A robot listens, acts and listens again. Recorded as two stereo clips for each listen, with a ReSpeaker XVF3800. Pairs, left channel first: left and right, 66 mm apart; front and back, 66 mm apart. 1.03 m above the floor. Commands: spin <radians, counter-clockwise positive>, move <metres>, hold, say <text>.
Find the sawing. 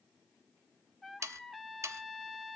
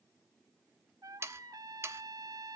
spin -2.27
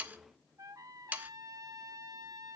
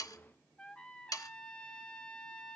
spin -0.44
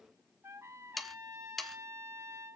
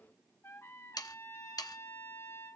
say Found it: sawing, straight ahead, 1 to 2 m away.